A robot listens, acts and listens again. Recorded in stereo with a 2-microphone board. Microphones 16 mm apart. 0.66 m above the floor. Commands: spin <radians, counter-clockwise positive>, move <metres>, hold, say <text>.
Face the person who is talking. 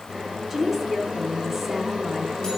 spin -0.35
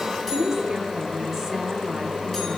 spin -2.44
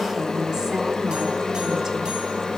hold
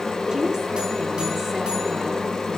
hold
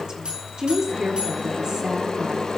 spin -0.87
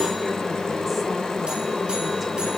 hold
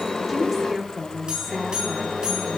say Found it: a woman speaking, straight ahead, 1 to 2 m away.